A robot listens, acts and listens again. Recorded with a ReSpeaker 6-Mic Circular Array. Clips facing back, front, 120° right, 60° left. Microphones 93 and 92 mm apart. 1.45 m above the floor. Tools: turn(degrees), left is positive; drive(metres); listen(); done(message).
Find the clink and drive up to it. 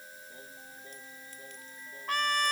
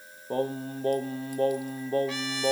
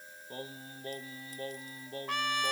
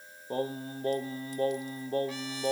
listen()
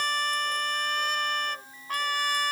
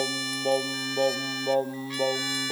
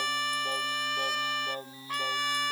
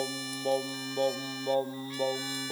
listen()
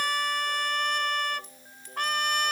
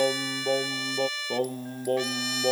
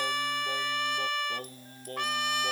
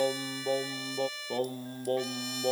done("I can't make out a clink to turn to.")